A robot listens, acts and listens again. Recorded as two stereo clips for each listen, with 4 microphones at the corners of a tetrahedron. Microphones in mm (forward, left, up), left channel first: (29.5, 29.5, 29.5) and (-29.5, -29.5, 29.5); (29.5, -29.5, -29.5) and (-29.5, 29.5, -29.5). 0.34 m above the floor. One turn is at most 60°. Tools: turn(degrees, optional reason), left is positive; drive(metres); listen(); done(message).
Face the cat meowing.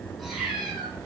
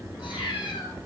turn(degrees=-50, reason="The cat meowing: 50° right.")
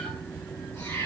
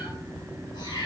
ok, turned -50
turn(degrees=-15, reason="The cat meowing is now 15° right.")
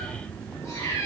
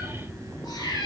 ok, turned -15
turn(degrees=-15, reason="The cat meowing is now 15° right.")
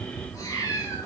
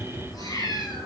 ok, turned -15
done("Facing the cat meowing.")